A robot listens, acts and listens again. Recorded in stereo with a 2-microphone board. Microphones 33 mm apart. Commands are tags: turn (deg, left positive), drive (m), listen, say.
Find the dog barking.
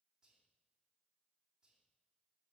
<listen/>
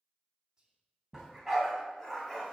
<turn deg="30"/>
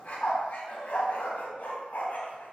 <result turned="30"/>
<turn deg="130"/>
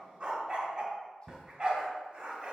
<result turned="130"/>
<turn deg="-25"/>
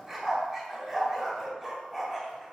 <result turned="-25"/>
<say>Found it: a dog barking, straight ahead.</say>